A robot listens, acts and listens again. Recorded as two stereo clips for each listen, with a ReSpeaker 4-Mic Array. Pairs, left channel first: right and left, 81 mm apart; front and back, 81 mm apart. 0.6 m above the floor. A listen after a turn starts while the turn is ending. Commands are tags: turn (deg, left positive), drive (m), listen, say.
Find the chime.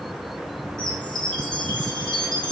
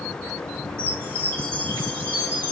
<turn deg="-120"/>
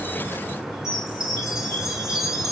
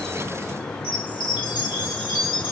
<say>Found it: a chime, straight ahead, over 4 m away.</say>